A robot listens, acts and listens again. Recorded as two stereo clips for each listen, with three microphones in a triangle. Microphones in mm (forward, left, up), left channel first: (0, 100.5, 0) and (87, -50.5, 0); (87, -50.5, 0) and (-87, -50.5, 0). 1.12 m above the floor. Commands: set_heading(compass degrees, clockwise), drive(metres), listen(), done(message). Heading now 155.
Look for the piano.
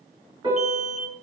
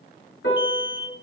done("Found it: a piano, straight ahead, over 4 m away.")